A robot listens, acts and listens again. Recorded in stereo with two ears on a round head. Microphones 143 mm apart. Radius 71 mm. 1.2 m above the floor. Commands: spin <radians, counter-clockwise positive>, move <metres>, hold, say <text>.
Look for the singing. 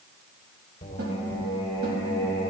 spin 0.44
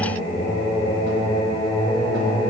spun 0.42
spin 0.61
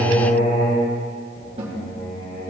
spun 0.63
spin 2.09
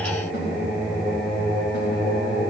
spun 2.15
say Found it: singing, straight ahead.